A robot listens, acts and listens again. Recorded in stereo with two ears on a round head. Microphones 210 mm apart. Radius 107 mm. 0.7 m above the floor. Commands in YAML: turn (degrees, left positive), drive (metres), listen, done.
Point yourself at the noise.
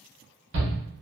turn: -50
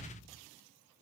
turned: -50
listen: true
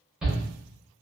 done: "Facing the shout."